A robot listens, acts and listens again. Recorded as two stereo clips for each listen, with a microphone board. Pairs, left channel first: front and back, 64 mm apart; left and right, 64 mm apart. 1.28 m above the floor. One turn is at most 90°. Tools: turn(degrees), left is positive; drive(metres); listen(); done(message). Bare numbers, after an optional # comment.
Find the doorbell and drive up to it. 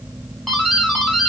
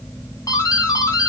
# The doorbell: 90° left.
turn(90)
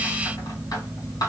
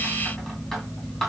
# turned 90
drive(1.0)
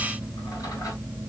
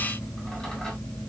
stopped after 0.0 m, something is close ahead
listen()
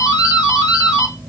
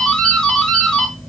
# The doorbell is now 15° left.
turn(15)
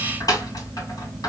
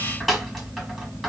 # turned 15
done("Blocked. The doorbell is further on, straight ahead.")